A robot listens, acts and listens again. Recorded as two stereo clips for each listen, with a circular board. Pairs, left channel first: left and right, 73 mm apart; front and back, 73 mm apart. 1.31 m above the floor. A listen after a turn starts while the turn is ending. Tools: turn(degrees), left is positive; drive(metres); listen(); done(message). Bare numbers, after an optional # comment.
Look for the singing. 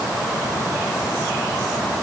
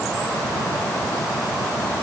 listen()
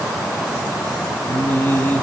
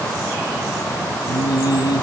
# The singing: 25° left.
turn(25)
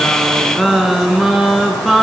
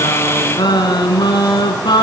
done("Found it: singing, straight ahead, over 4 m away.")